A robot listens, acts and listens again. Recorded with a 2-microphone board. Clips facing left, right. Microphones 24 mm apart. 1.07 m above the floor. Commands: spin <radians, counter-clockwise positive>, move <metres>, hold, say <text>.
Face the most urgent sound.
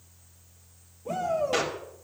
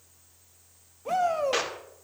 spin -1.05
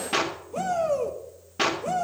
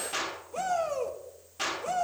say Found it: a shout, straight ahead, 2 to 4 m away.